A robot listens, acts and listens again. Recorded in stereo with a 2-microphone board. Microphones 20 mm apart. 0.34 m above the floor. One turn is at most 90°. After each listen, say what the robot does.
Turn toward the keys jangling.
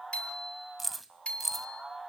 Turn 30° right.
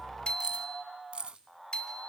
Turn 90° right.
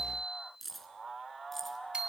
Turn 10° left.
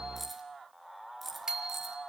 Facing the keys jangling.